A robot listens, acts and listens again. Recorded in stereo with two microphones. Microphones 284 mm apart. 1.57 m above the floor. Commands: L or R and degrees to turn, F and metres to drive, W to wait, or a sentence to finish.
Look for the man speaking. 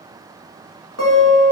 W
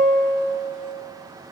W
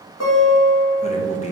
L25
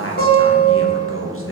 L125
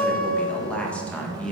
Found it: a man speaking, straight ahead.